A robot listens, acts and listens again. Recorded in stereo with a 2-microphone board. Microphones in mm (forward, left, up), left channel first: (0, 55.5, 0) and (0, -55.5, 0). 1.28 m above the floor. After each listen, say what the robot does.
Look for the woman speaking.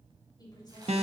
Turn 35° left.
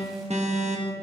Keep listening.
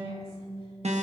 Keep listening.
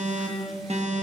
I heard a woman speaking, but can't make it out now. It was about straight ahead or 110° left.